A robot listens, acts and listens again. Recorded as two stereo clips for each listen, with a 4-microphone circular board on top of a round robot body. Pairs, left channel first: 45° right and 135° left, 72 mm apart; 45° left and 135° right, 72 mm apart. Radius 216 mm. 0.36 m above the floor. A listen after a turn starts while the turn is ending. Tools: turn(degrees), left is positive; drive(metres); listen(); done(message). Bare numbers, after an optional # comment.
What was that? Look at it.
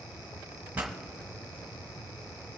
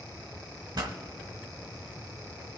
# The pop: 155° right.
turn(-155)
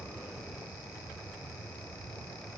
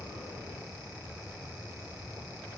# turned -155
done("Facing where the pop came from. I can't hear it now.")